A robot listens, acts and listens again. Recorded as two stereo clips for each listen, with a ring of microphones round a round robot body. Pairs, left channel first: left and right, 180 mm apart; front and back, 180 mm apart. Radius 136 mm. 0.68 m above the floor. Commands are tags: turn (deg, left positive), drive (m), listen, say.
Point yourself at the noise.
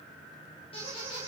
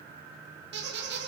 <turn deg="160"/>
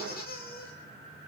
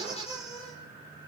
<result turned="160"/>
<turn deg="55"/>
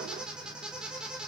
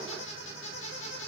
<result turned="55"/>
<say>Facing the squeak, over 4 m away.</say>